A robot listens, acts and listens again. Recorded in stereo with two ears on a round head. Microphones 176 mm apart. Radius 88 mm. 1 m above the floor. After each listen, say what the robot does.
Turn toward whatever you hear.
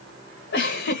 Turn 60° left.
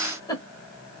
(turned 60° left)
Turn 25° left.
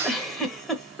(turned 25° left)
Facing the giggle.